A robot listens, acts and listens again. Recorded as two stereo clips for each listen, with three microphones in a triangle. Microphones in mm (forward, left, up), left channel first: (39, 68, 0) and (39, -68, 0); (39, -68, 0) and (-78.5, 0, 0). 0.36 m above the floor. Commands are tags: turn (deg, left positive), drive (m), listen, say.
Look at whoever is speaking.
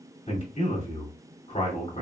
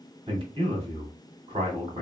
<turn deg="105"/>
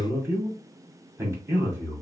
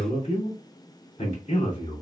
<turn deg="-20"/>
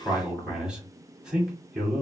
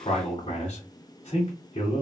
<say>Facing the man speaking.</say>